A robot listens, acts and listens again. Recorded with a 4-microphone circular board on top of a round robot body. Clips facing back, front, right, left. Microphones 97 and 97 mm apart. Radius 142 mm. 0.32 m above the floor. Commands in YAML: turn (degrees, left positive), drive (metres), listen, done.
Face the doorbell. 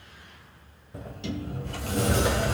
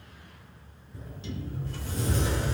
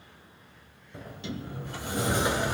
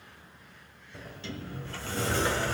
listen: true
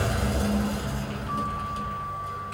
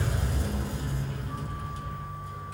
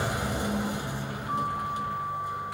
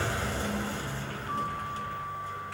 listen: true
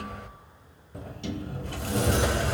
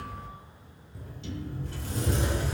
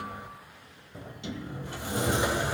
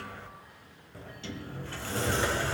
done: "I can't make out a doorbell, only a sliding door."